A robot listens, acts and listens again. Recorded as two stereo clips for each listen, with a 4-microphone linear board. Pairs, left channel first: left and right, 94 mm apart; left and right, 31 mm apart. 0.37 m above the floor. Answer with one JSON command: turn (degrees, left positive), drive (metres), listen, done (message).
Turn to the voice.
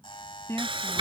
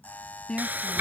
{"turn": 30}
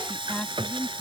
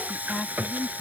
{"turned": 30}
{"turn": 20}
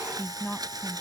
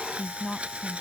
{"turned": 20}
{"done": "Facing the woman speaking."}